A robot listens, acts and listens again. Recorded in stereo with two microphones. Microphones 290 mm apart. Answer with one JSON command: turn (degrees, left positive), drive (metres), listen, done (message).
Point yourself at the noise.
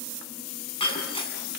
{"turn": 20}
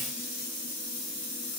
{"listen": true}
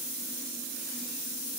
{"done": "I heard breaking glass, but can't make it out now. It was about straight ahead or 140° left."}